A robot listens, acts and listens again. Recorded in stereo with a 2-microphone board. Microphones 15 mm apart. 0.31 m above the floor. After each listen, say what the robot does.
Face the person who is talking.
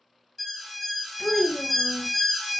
Turn 40° left.
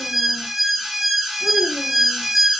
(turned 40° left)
Keep listening.
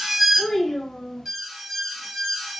Turn 90° left.
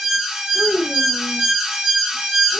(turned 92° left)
Facing the child speaking, 1 to 2 m away.